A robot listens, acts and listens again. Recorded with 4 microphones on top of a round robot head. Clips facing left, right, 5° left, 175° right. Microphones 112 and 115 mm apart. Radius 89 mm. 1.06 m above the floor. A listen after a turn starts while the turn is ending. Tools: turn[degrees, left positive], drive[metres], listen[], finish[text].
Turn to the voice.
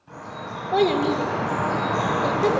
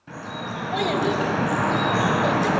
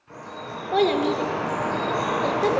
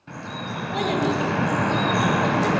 Thought: The child speaking: 45° left.
Action: turn[45]
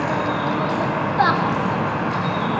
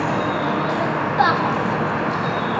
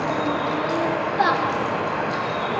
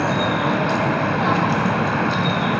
Action: listen[]
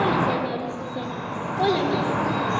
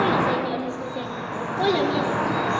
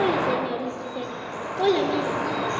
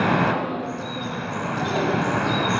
Action: finish[Facing the child speaking.]